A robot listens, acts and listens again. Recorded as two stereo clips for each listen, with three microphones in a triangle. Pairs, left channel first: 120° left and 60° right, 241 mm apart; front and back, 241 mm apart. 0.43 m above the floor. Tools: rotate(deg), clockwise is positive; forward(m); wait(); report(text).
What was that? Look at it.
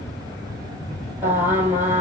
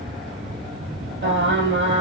rotate(140)
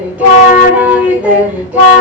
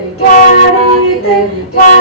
rotate(-25)
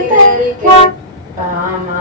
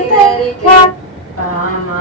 report("Found it: singing, straight ahead, 2 to 4 m away.")